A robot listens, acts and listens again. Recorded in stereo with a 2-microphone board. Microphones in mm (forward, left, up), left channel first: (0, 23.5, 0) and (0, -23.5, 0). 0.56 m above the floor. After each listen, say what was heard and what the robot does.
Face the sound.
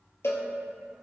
The cowbell: about 65° left or 115° left. Turn 65° left.
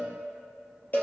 So it is at 40° left. Turn 40° left.
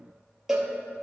The cowbell is now 10° right. Turn 10° right.
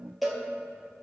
Found it: a cowbell, straight ahead, 2 to 4 m away.